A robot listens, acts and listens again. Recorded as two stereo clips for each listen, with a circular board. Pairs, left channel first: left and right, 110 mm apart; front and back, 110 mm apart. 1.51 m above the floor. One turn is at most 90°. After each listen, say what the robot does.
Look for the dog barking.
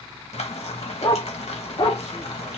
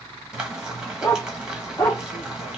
Turn 65° left.
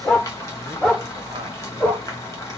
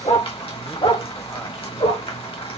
Turn 15° left.
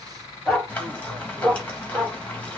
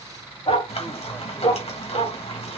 Found it: a dog barking, straight ahead, 2 to 4 m away.